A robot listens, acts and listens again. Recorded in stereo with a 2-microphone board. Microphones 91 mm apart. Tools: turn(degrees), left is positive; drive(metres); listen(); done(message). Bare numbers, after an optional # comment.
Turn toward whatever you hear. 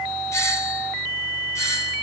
# The doorbell: about 35° left or 145° left.
turn(35)
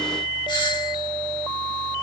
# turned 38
# So it is at 105° left.
turn(105)
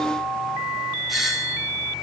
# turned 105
done("Facing the doorbell.")